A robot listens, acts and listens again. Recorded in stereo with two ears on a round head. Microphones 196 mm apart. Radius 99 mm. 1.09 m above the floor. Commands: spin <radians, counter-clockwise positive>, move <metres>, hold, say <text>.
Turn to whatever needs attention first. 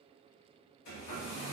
hold
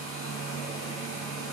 hold
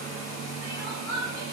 spin 0.44
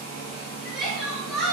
say Found it: crying, straight ahead.